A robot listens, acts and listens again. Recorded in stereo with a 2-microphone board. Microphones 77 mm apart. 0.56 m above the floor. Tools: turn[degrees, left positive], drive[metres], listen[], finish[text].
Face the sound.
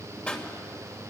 Thought: The pop: about 15° left or 165° left.
Action: turn[15]
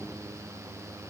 Action: listen[]
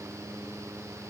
Action: finish[I heard a pop, but can't make it out now. It was about straight ahead or 150° left.]